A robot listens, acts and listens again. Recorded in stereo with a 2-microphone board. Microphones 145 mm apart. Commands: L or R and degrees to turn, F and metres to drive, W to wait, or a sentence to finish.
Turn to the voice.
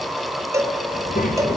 L75
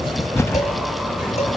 W
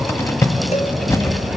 W
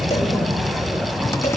Facing the child speaking, 2 to 4 m away.